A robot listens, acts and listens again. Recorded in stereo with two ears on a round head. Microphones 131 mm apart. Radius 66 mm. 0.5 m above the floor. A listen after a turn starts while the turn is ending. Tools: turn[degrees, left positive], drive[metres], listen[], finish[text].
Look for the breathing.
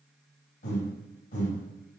Thought: The breathing: about 50° left or 130° left.
Action: turn[50]
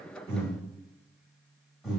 Action: finish[Found it: breathing, straight ahead, 1 to 2 m away.]